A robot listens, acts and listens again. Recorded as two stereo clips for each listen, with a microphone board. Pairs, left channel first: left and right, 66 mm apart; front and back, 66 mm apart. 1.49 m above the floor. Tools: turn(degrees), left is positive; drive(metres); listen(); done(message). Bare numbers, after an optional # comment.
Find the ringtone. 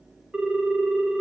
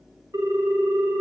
# The ringtone: 165° right.
turn(-165)
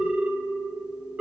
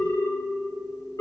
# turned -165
# The ringtone is now 20° right.
turn(-20)
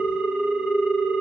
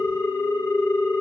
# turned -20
# The ringtone is now 10° right.
turn(-10)
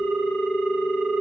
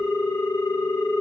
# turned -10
done("Facing the ringtone, 1 to 2 m away.")